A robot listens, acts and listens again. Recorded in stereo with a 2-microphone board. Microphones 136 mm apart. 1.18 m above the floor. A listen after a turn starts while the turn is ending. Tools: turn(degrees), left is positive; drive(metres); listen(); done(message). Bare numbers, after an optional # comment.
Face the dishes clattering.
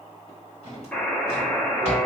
listen()
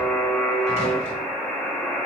listen()
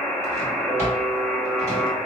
done("I can't make out dishes clattering, only a drawer and a buzzer.")